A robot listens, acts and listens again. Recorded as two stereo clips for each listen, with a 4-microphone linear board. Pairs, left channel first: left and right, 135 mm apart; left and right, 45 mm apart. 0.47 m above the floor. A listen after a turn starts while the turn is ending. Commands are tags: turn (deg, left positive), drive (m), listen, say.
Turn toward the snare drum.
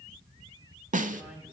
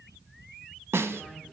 <turn deg="-90"/>
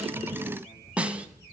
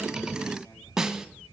<turn deg="-10"/>
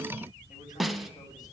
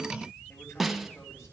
<say>Found it: a snare drum, straight ahead, under 1 m away.</say>